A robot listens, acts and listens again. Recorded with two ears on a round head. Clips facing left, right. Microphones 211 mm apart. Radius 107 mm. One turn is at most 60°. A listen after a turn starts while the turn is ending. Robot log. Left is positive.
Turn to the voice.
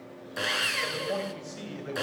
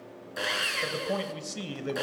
note: The man speaking: about 55° right or 125° right.
cmd yaw -55
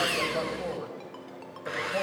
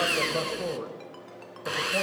note: So it is at 50° right.
cmd yaw -50
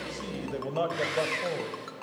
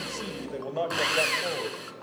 end: Found it: a man speaking, straight ahead.